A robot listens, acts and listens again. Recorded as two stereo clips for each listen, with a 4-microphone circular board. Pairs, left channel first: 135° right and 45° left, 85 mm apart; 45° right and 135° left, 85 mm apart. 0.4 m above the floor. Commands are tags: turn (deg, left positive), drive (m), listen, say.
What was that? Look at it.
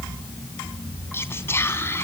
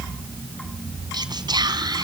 <turn deg="165"/>
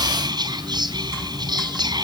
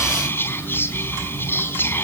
<turn deg="20"/>
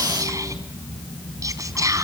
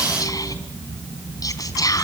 <say>Facing the whispering, over 4 m away.</say>